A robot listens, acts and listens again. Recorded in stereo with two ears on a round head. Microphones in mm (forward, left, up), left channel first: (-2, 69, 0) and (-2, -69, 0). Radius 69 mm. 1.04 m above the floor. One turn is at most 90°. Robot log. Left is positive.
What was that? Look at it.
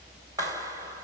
note: The clap: about 20° right or 160° right.
cmd yaw -20
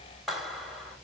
end: Facing the clap, 2 to 4 m away.